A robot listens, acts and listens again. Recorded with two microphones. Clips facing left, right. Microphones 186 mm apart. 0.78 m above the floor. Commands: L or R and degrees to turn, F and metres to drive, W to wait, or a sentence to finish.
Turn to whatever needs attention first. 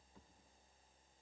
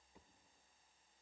W
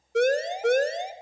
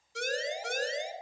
L65
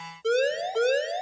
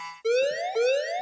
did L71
Facing the siren, 2 to 4 m away.